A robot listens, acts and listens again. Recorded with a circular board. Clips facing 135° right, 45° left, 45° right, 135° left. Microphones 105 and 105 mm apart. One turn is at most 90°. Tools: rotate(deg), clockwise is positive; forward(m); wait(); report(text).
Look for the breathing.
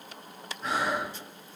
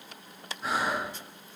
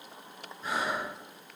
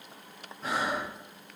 rotate(-90)
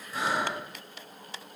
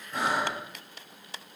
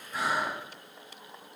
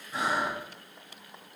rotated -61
rotate(-70)
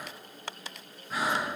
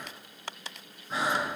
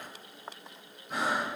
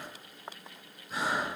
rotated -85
rotate(20)
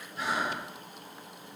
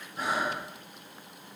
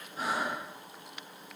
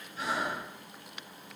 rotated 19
report("Found it: breathing, straight ahead, 1 to 2 m away.")